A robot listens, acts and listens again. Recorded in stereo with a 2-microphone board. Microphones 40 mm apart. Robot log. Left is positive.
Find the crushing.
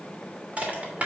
note: The crushing: about 35° right or 145° right.
cmd yaw -35
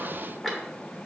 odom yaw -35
end: Found it: crushing, straight ahead, 2 to 4 m away.